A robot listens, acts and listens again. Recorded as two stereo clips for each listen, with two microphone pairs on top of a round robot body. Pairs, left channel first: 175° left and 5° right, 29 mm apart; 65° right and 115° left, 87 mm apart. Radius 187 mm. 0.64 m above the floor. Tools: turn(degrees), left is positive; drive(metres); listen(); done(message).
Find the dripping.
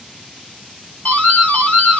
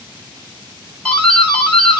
listen()
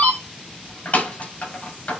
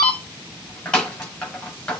listen()
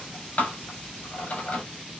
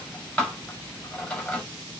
done("I can't make out dripping, only a doorbell.")